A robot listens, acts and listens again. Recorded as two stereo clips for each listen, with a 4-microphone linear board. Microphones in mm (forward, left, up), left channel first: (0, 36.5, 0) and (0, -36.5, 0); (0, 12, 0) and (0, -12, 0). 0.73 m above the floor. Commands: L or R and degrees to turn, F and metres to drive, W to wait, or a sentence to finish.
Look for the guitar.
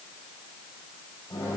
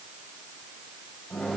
W
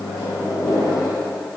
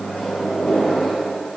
W
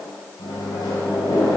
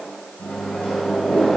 I can't make out a guitar, only a microwave.